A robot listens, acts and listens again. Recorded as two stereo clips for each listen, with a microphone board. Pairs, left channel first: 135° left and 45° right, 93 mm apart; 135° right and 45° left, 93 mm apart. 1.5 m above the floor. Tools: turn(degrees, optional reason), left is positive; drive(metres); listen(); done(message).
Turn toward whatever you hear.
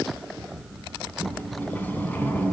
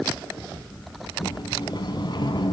turn(degrees=-160, reason="The sliding door: 160° right.")
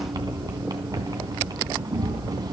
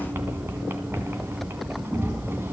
turn(degrees=-15, reason="The sliding door is now 15° right.")
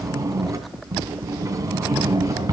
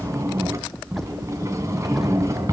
done("Found it: a sliding door, straight ahead.")